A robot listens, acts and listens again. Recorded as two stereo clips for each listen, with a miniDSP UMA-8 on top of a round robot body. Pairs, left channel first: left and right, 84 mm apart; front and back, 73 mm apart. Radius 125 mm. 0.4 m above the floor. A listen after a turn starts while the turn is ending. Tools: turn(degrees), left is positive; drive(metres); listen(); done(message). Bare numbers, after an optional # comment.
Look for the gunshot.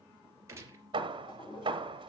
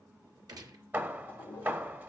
# The gunshot: 150° right.
turn(-150)
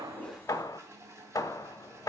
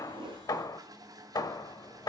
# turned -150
done("I heard a gunshot from this way, but can't make it out now.")